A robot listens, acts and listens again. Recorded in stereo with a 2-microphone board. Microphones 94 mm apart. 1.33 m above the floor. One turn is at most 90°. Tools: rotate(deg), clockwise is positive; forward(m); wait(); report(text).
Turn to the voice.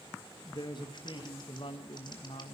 rotate(-65)
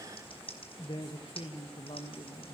rotate(-70)
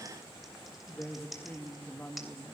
rotate(-15)
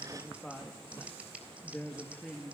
report("Facing the woman speaking.")